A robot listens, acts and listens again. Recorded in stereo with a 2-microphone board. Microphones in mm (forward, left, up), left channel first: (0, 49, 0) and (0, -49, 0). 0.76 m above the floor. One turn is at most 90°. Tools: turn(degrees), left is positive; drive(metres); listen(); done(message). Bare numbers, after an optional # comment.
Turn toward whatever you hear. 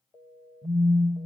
# The phone buzzing: about 40° right or 140° right.
turn(-40)
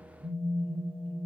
# So it is at 90° right.
turn(-90)
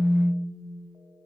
done("Facing the phone buzzing.")